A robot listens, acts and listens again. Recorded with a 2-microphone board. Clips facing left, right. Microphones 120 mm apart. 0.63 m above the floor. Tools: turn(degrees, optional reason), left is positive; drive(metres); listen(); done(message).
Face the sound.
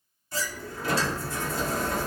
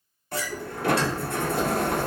turn(degrees=-65, reason="The sliding door: about 65° right or 115° right.")
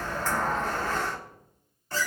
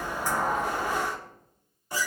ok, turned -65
turn(degrees=-15, reason="So it is at 15° right.")
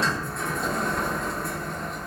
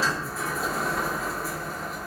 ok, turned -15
done("Found it: a sliding door, straight ahead.")